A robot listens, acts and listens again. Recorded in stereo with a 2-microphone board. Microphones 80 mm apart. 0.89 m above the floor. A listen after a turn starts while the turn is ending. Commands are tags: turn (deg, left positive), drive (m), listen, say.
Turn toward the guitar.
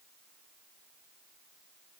<listen/>
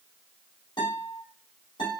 <turn deg="90"/>
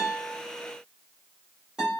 <turn deg="-10"/>
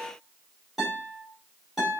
<say>Found it: a guitar, straight ahead.</say>